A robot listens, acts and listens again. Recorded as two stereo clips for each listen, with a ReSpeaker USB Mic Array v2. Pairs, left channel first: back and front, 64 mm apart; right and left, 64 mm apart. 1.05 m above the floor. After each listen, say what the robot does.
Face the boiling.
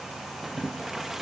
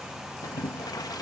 Turn 85° right.
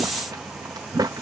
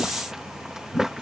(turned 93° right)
Turn 10° left.
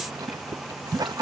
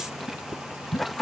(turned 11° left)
Facing the boiling.